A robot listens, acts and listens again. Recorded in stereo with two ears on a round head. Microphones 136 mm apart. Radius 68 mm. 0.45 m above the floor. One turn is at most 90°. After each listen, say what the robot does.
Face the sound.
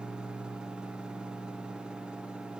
Keep listening.
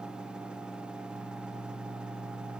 Keep listening.
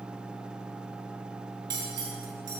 Turn 30° right.
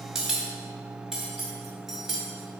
Found it: cutlery clinking, straight ahead, 1 to 2 m away.